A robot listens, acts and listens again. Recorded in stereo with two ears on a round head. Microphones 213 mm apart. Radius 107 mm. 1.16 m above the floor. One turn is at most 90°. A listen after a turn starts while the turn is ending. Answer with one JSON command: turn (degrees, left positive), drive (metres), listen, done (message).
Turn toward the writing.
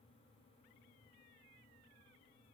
{"listen": true}
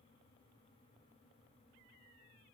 {"listen": true}
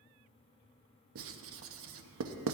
{"turn": -55}
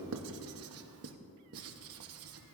{"turn": -65}
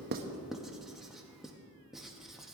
{"done": "Facing the writing."}